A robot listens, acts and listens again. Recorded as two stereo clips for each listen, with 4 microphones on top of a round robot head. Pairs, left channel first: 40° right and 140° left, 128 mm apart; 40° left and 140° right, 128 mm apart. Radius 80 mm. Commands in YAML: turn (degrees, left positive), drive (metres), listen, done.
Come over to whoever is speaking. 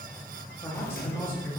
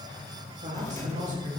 turn: -110
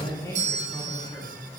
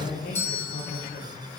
turn: 30
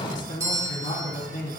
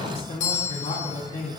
turn: -10
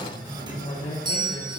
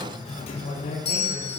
drive: 1.0
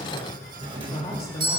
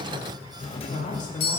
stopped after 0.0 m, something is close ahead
turn: 10
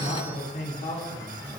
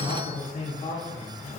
done: "Something is in my way. I am facing the man speaking but have not reached it."